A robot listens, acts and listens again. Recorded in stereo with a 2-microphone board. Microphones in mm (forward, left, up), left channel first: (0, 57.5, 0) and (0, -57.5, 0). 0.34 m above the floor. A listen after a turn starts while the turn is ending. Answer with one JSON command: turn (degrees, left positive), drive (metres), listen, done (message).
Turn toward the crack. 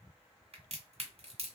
{"turn": -65}
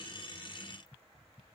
{"listen": true}
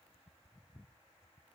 {"done": "I heard a crack, but can't make it out now. It was about straight ahead or 50° right."}